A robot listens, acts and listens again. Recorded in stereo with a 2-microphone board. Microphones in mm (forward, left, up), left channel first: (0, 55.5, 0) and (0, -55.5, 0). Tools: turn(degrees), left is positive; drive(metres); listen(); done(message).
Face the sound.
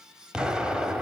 turn(degrees=-30)
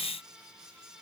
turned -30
listen()
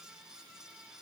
done("I heard an explosion, but can't make it out now. It was about 25° left or 145° right.")